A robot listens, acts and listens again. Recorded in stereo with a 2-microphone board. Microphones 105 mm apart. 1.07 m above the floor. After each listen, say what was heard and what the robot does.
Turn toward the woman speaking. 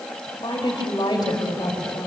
The woman speaking: about 40° left or 140° left. Turn 40° left.
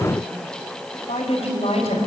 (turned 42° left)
So it is at 105° left. Turn 105° left.
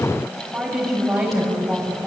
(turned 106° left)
Facing the woman speaking, over 4 m away.